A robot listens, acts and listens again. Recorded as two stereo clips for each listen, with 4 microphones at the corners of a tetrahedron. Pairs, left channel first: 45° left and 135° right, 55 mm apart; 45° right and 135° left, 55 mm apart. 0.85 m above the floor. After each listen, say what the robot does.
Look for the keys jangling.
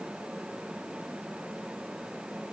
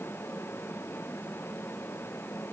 Keep listening.
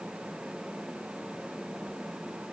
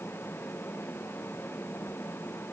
Keep listening.
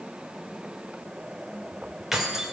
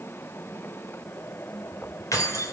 Turn 55° right.
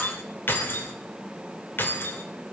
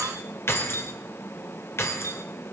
Found it: keys jangling, straight ahead.